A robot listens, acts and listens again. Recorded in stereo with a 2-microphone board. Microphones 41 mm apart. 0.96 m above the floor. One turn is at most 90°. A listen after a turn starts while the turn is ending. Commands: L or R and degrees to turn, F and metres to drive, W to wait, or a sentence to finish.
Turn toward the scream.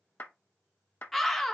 L30
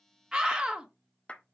R25
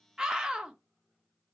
R20
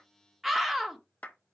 Found it: a scream, straight ahead, 1 to 2 m away.